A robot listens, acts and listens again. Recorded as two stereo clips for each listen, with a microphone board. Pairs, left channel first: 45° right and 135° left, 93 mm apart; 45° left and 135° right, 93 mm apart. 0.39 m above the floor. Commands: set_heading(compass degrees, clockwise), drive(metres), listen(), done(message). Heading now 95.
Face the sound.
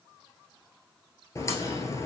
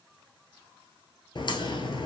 set_heading(80)
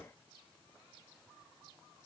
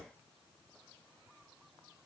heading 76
done("I heard a crack from this way, but can't make it out now.")